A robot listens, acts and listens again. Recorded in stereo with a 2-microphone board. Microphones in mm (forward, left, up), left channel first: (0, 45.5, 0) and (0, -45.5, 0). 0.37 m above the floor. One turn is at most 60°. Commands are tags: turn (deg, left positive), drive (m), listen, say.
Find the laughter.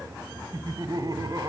<turn deg="-45"/>
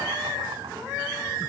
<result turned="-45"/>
<listen/>
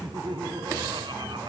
<turn deg="-60"/>
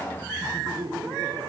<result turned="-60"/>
<turn deg="-60"/>
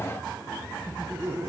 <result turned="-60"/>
<turn deg="-25"/>
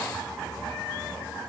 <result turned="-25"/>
<listen/>
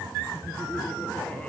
<listen/>
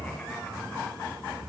<say>Facing where the laughter came from. I can't hear it now.</say>